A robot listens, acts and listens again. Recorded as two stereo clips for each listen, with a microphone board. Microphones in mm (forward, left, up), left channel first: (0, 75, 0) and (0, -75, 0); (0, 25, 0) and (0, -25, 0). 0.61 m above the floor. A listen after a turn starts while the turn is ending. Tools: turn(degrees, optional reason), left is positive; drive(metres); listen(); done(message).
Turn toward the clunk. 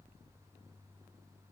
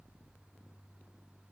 listen()
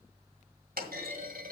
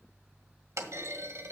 turn(degrees=-90)
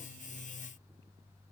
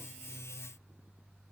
done("I heard a clunk from this way, but can't make it out now.")